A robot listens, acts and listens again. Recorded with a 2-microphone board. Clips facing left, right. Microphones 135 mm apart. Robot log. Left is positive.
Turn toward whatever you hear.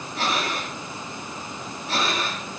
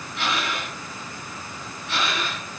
note: The breathing: about 40° left or 140° left.
cmd yaw +40
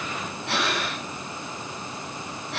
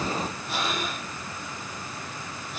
note: So it is at 100° left.
cmd yaw +100
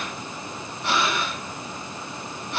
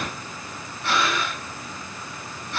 note: The breathing is now 20° left.
cmd yaw +20
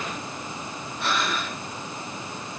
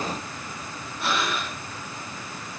end: Found it: breathing, straight ahead.